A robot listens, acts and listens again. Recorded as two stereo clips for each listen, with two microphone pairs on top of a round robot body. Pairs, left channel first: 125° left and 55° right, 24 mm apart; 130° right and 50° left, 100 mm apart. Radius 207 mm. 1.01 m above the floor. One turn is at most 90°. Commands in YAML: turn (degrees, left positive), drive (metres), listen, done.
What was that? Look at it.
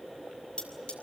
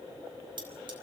turn: 90
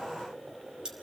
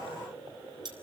done: "Found it: cutlery clinking, straight ahead."